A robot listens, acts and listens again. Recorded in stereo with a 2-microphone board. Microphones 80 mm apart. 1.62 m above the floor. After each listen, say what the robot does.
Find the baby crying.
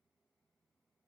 Keep listening.
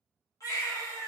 Turn 45° left.
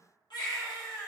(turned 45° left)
Turn 85° left.
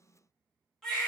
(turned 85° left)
Found it: a baby crying, straight ahead, 1 to 2 m away.